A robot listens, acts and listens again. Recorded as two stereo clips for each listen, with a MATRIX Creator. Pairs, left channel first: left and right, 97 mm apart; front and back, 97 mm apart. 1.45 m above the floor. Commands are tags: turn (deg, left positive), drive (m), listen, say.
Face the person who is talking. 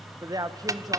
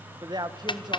<turn deg="-140"/>
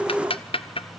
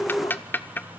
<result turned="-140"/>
<listen/>
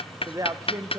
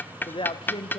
<turn deg="-35"/>
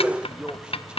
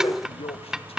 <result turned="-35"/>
<turn deg="-10"/>
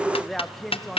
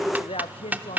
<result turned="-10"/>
<say>Facing the man speaking, 1 to 2 m away.</say>